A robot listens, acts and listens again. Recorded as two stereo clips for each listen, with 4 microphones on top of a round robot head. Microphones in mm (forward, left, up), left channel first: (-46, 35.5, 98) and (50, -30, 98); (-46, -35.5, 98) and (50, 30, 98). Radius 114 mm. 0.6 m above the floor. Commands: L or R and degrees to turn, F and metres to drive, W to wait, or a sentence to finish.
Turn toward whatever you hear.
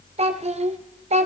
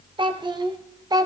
R20
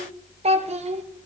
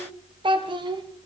R15
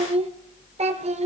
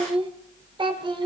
R15
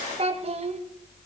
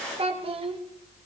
Found it: a child speaking, straight ahead, 2 to 4 m away.